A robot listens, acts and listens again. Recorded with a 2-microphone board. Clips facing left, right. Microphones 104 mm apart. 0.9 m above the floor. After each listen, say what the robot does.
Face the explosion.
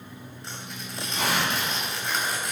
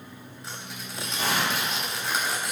Turn 75° left.
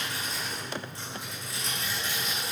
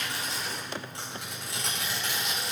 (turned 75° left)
Keep listening.
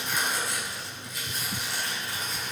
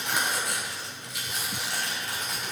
I heard an explosion, but can't make it out now. It was about straight ahead or 30° left.